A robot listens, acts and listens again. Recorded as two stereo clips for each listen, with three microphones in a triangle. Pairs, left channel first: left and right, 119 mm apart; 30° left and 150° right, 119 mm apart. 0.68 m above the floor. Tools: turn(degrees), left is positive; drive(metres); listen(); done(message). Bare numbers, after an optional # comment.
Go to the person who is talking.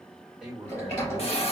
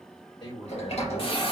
# The man speaking: 10° right.
turn(-10)
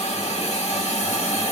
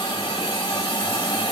listen()
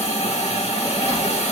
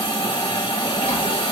listen()
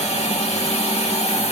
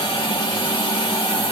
done("Facing where the man speaking came from. I can't hear it now. I did not reach it.")